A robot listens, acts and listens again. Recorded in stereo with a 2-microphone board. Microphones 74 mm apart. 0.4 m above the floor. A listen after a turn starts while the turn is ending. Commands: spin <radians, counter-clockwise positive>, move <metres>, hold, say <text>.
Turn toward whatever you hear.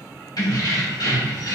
spin 1.13
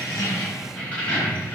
spin 0.44
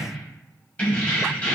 spin 0.35
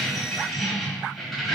say Found it: keys jangling, straight ahead.